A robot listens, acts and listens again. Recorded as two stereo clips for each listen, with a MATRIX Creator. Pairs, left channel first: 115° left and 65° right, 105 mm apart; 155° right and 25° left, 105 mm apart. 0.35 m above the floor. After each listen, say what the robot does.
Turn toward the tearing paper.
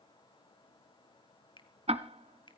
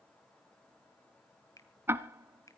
Keep listening.
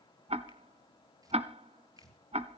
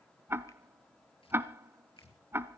Turn 125° right.
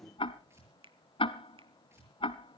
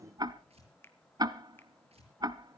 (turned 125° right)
Found it: tearing paper, straight ahead, over 4 m away.